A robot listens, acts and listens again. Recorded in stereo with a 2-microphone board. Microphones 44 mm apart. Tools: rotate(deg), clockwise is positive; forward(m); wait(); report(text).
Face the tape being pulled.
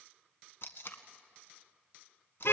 rotate(-65)
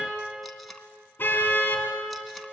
wait()
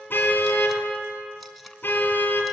wait()
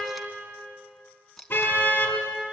report("Facing the tape being pulled, 1 to 2 m away.")